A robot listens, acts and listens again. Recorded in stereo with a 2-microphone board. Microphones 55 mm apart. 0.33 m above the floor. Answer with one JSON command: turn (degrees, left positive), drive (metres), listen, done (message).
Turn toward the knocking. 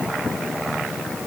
{"listen": true}
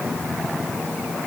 {"listen": true}
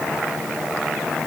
{"done": "I can't make out knocking."}